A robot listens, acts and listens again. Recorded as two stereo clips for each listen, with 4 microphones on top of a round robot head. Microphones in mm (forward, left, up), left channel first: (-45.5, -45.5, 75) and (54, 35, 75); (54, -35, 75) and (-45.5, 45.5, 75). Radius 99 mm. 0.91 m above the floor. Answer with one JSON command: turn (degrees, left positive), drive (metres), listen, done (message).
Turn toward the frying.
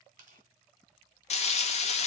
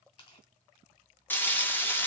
{"turn": -115}
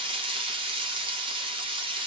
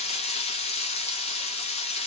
{"done": "Facing the frying, 1 to 2 m away."}